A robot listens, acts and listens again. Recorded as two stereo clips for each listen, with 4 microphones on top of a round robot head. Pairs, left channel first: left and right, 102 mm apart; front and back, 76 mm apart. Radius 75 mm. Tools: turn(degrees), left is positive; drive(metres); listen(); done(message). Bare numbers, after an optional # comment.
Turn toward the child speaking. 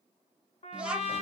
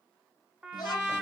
# The child speaking: 10° right.
turn(-10)
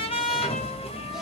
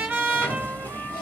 listen()
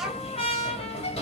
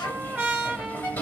listen()
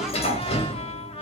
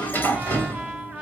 done("Facing where the child speaking came from. I can't hear it now.")